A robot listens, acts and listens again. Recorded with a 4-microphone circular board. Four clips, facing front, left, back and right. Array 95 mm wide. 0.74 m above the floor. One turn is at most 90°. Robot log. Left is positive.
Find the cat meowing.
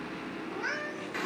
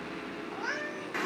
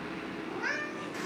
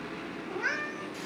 note: The cat meowing: 105° right.
cmd yaw -90
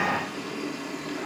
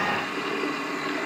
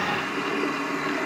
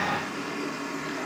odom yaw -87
note: Nothing new. It was at 20° right.
cmd yaw -20
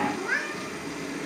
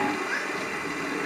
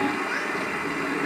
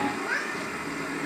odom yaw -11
note: The cat meowing is now 15° right.
cmd yaw -15
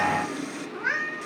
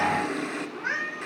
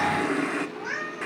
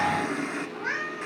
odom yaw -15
end: Found it: a cat meowing, straight ahead.